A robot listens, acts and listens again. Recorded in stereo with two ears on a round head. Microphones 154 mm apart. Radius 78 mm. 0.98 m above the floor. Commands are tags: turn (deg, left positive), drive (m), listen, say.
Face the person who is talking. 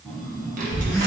<turn deg="-45"/>
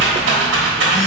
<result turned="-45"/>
<say>Facing the child speaking, 1 to 2 m away.</say>